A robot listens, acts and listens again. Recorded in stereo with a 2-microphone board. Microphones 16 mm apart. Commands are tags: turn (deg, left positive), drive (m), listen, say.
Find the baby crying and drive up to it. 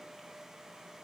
<listen/>
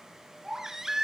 <turn deg="-25"/>
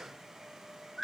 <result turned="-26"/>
<drive m="1.0"/>
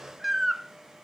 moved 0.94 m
<drive m="1.0"/>
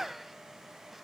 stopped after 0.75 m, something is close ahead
<turn deg="-10"/>
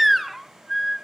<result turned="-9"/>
<say>Arrived at the baby crying, straight ahead.</say>